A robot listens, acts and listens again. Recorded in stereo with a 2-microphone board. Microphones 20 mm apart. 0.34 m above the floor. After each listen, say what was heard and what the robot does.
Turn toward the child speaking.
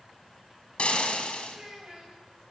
The child speaking: about 40° right or 140° right. Turn 40° right.
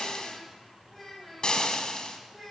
Found it: a child speaking, straight ahead.